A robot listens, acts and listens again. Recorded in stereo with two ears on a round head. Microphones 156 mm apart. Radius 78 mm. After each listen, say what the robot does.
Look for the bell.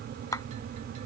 Keep listening.
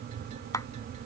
Keep listening.
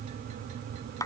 I can't make out a bell to turn to.